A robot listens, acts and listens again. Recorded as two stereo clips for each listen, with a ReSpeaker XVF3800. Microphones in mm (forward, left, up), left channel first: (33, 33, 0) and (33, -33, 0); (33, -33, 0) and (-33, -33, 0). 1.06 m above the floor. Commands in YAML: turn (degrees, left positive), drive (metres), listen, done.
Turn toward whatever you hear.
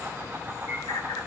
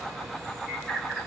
turn: 80
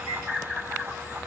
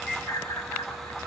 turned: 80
turn: -10
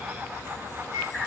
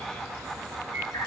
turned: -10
done: "Found it: a bird, straight ahead, over 4 m away."